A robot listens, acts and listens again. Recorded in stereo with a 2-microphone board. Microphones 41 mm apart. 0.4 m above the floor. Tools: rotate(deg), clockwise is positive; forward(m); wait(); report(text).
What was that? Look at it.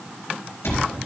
rotate(-90)
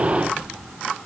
wait()
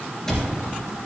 rotate(-10)
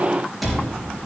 report("Found it: a cupboard door, straight ahead.")